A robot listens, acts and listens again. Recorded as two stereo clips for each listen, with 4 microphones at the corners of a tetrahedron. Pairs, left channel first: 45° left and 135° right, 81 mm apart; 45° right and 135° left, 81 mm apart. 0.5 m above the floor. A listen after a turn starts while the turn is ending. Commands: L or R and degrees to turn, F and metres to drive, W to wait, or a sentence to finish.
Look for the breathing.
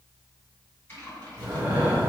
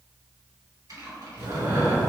L165
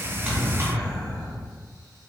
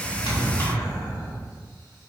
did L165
R35
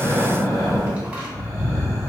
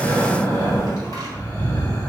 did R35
Found it: breathing, straight ahead, 1 to 2 m away.